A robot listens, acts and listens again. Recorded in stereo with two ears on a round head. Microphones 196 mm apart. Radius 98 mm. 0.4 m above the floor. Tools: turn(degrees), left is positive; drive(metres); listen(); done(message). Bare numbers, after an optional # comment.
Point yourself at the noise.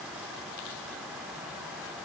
listen()
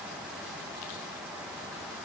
listen()
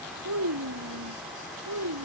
# The child speaking: about 75° right or 105° right.
turn(-75)
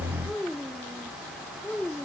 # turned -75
done("Facing the child speaking.")